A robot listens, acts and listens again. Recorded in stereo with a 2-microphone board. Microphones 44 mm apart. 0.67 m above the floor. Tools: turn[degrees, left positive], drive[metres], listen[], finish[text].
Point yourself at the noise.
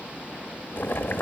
Thought: The boiling: about 50° left or 130° left.
Action: turn[50]
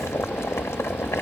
Thought: So it is at 75° left.
Action: turn[75]
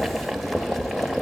Action: finish[Found it: boiling, straight ahead, 1 to 2 m away.]